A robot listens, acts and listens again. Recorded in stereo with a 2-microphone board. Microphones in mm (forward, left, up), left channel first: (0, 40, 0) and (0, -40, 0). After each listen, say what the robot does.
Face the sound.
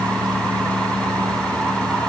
Keep listening.
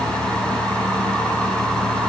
Keep listening.
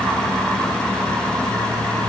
I can't make out anything to turn to.